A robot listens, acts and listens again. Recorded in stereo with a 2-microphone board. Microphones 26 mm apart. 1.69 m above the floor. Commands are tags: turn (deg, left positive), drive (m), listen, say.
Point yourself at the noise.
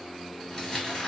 <turn deg="30"/>
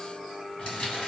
<turn deg="110"/>
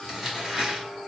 <turn deg="-25"/>
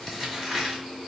<turn deg="-10"/>
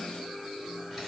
<listen/>
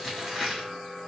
<say>Facing the crumpling.</say>